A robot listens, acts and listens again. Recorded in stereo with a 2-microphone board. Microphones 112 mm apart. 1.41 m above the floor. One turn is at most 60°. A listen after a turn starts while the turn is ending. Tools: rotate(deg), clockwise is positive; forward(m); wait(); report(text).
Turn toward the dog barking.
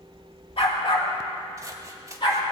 rotate(-45)
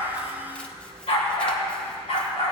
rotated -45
rotate(-60)
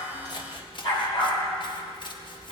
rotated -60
rotate(-55)
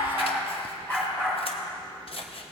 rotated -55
rotate(-15)
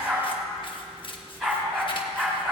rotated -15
report("Facing the dog barking, over 4 m away.")